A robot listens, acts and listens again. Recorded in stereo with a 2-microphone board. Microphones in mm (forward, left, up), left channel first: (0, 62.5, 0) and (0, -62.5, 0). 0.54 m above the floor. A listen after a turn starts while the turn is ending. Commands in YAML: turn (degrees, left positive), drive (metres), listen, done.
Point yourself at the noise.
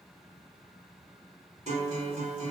turn: -70
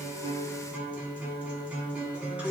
turn: -10
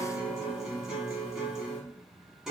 done: "Found it: a guitar, straight ahead."